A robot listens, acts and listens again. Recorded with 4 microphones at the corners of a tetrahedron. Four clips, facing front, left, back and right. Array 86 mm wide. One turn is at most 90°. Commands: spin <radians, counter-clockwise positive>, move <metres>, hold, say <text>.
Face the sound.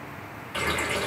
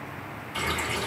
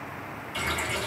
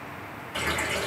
spin -0.52
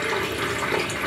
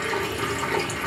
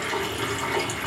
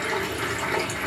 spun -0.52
say Facing the running tap, 1 to 2 m away.